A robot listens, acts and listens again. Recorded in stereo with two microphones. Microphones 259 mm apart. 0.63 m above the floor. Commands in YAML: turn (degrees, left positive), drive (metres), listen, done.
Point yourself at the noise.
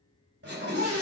turn: -60
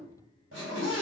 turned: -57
turn: -55
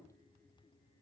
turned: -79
turn: 20
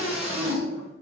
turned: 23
done: "Facing the scream, 2 to 4 m away."